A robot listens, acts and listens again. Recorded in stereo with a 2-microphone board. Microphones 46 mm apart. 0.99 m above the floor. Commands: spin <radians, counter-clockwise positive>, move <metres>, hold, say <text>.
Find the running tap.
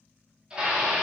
hold
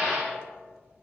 hold
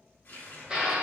spin 0.79
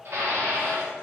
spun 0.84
hold
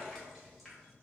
say Facing the running tap.